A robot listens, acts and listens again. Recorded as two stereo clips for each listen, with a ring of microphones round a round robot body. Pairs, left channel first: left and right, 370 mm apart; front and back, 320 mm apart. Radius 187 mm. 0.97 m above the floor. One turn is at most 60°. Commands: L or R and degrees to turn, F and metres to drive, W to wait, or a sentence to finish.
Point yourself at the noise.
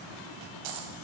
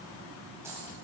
R60
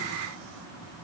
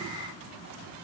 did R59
R35
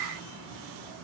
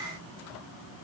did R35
I heard a dropped coin from this way, but can't make it out now.